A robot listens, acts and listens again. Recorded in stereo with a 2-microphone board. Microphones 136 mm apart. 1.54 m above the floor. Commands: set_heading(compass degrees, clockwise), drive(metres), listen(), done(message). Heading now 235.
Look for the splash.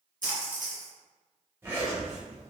set_heading(325)
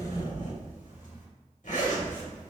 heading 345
set_heading(325)
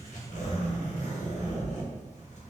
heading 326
done("I heard a splash from this way, but can't make it out now.")